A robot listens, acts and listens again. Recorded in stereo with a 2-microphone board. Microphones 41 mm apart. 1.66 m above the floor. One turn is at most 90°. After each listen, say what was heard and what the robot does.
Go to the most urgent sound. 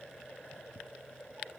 Keep listening.
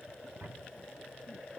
Keep listening.
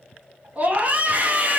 The scream: about 40° right or 140° right. Turn 40° right.
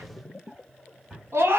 So it is at 100° right. Turn 90° right.
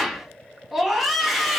Drive 1.0 m forward.
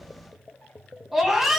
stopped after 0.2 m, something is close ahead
Blocked. The scream is further on, straight ahead.